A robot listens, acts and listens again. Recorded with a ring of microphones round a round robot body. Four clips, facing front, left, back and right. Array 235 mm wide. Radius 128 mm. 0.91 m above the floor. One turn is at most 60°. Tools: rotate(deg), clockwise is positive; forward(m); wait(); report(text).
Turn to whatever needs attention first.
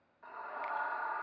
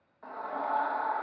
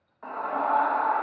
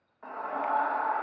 rotate(60)
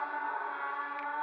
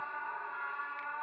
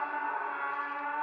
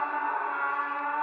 rotate(60)
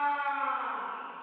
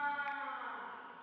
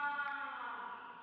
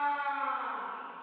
rotate(30)
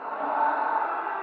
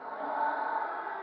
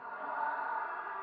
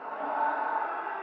rotate(10)
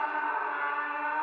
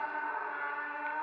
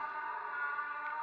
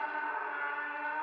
report("Found it: a scream, straight ahead.")